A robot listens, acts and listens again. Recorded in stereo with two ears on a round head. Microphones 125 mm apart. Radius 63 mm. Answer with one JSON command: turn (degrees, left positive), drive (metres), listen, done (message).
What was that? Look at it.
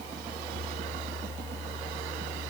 {"listen": true}
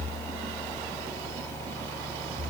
{"listen": true}
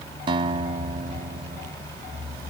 {"turn": -35}
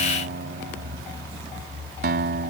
{"turn": -110}
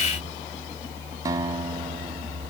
{"turn": -25}
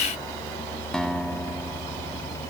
{"done": "Found it: a guitar, straight ahead."}